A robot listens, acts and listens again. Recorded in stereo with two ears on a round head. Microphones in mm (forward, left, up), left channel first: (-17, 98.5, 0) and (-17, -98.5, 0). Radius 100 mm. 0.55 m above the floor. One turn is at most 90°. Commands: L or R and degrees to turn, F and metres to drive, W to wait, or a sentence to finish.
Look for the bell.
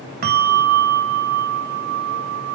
R45
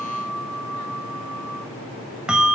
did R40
Found it: a bell, straight ahead, 1 to 2 m away.